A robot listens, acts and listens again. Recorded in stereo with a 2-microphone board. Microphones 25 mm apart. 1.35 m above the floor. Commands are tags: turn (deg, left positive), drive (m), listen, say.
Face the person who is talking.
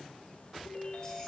<listen/>
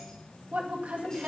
<turn deg="-70"/>
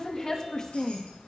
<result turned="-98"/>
<turn deg="25"/>
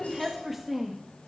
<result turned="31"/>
<say>Found it: a woman speaking, straight ahead, 2 to 4 m away.</say>